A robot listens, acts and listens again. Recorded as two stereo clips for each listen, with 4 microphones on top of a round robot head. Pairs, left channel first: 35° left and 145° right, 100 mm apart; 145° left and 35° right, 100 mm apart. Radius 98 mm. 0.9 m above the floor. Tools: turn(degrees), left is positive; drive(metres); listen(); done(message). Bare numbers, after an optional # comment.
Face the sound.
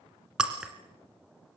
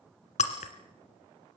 # The breaking glass: 135° left.
turn(135)
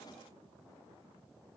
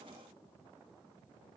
done("Facing where the breaking glass came from. I can't hear it now.")